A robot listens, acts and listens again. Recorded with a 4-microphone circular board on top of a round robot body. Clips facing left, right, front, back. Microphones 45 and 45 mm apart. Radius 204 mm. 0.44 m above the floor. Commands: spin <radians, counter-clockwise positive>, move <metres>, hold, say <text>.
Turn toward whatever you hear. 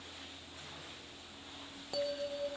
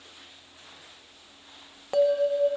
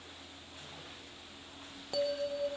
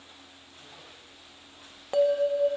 spin -2.27
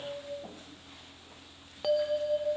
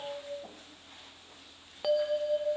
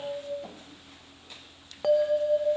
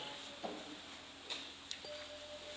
say Found it: a bell, straight ahead.